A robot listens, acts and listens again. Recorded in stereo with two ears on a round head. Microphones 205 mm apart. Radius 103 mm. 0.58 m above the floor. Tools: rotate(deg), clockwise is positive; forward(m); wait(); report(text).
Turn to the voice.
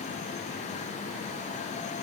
wait()
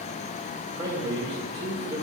rotate(20)
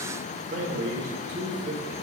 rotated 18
rotate(145)
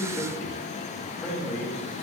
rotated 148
report("Found it: a man speaking, straight ahead.")